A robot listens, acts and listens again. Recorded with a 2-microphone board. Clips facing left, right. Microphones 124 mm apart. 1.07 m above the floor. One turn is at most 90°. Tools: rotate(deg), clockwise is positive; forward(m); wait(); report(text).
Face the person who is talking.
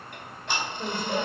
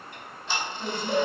rotate(-25)
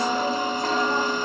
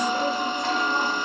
wait()
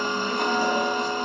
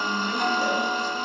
wait()
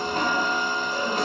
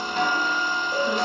report("I heard a woman speaking, but can't make it out now. It was about straight ahead or 130° left.")